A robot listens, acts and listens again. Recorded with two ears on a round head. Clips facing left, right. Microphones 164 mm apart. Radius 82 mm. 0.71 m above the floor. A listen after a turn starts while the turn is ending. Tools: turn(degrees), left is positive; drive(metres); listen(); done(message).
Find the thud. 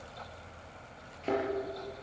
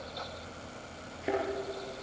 turn(degrees=-30)
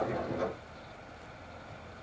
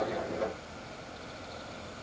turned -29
listen()
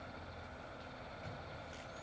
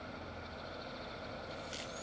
done("I heard a thud, but can't make it out now. It was about 15° left or 140° right.")